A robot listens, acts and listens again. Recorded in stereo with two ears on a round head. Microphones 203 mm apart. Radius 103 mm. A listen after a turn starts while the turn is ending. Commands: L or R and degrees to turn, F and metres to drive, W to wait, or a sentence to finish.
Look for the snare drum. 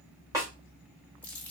R15
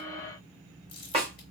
R150
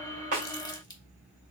W
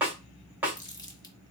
R10
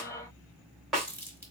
Facing the snare drum.